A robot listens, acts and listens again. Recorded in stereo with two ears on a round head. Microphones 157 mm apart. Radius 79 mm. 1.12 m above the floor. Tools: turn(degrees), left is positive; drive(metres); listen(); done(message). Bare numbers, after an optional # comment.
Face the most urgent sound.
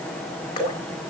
listen()
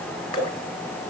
listen()
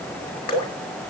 done("I can't make out anything urgent to turn to.")